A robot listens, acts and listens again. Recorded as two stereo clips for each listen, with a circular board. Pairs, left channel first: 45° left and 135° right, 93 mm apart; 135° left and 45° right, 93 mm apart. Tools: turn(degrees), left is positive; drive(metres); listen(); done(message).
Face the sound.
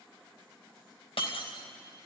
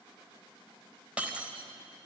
turn(degrees=30)
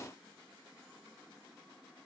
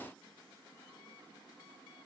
done("Facing where the breaking glass came from. I can't hear it now.")